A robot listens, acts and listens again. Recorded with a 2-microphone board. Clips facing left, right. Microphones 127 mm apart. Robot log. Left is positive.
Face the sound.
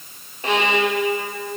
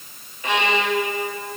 note: The violin: about 30° left or 150° left.
cmd yaw +30
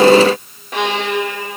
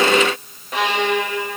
end: Facing the violin.